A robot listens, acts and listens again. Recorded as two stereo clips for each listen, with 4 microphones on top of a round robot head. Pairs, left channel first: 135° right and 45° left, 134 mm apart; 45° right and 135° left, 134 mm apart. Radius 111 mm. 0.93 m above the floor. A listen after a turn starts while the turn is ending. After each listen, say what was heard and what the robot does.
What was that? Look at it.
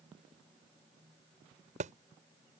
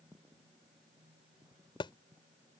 The thud: 10° left. Turn 10° left.
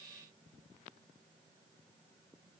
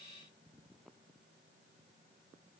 Facing where the thud came from. I can't hear it now.